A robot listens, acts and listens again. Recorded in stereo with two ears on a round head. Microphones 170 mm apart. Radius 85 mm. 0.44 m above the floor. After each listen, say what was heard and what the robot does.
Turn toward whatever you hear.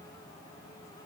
Keep listening.
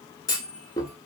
The clunk: about 20° left or 160° left. Turn 20° left.
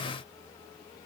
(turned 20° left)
Keep listening.
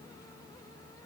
I heard a clunk, but can't make it out now. It was about straight ahead or 140° left.